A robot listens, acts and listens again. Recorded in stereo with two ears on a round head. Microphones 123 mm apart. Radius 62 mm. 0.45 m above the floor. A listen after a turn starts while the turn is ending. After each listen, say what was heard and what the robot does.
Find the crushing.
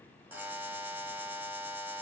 Keep listening.
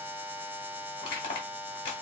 The crushing: about 35° left or 145° left. Turn 35° left.
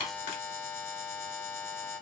Keep listening.
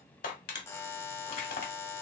So it is at 105° left. Turn 105° left.
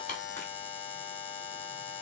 Keep listening.
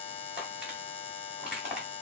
Found it: crushing, straight ahead.